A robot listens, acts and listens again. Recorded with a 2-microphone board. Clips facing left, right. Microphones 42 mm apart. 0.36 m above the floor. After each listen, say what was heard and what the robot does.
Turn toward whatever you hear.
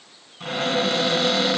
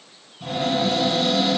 The cupboard door: about 65° left or 115° left. Turn 65° left.
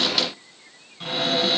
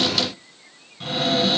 Found it: a cupboard door, straight ahead.